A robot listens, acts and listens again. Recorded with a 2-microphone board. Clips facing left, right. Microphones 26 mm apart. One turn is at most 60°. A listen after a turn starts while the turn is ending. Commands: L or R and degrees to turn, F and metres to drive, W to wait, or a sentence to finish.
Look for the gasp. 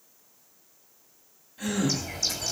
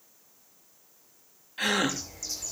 R60
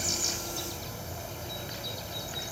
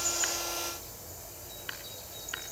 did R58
W
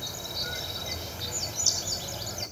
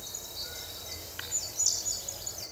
I heard a gasp, but can't make it out now. It was about straight ahead or 65° right.